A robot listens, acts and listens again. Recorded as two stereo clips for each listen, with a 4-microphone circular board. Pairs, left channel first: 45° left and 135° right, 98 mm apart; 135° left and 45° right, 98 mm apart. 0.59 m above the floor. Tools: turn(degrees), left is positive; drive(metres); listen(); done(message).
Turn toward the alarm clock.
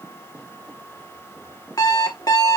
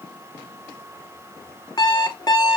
turn(degrees=90)
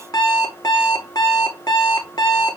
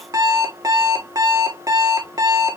done("Facing the alarm clock.")